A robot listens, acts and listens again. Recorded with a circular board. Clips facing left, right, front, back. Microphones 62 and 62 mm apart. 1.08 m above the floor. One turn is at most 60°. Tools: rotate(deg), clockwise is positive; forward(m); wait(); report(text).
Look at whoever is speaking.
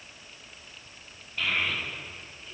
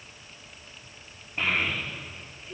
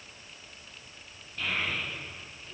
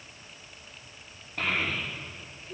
rotate(60)
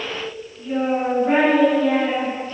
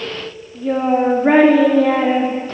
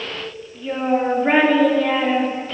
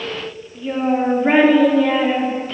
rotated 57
rotate(60)
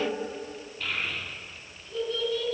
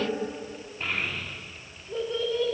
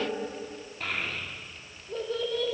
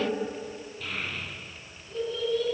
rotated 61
rotate(30)
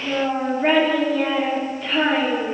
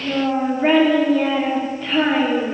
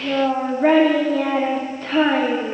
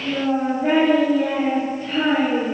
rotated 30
report("Facing the child speaking, 1 to 2 m away.")